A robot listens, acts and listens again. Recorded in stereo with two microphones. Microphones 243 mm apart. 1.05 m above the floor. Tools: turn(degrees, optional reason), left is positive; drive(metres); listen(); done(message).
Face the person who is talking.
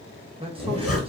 turn(degrees=-20, reason="The man speaking: about 20° right or 160° right.")
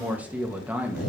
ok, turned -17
done("Found it: a man speaking, straight ahead, 1 to 2 m away.")